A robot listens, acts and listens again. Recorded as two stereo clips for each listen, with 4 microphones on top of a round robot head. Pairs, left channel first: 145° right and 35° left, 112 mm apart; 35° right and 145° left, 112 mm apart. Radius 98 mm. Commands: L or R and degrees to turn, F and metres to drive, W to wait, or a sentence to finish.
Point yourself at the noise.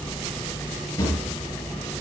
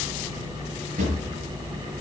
L155
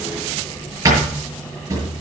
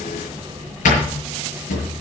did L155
R30
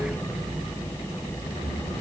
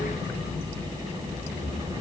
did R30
W
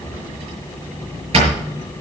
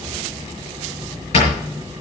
Found it: a drawer, straight ahead, over 4 m away.